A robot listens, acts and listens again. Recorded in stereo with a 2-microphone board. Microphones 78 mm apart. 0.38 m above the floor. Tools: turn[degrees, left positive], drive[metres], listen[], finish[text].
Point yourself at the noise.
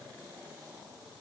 Action: listen[]
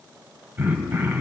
Thought: The throat clearing: about 25° right or 155° right.
Action: turn[-25]
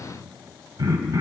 Thought: So it is at 120° right.
Action: turn[-120]
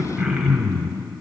Thought: The throat clearing is now 10° right.
Action: turn[-10]
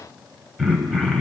Action: finish[Facing the throat clearing, 1 to 2 m away.]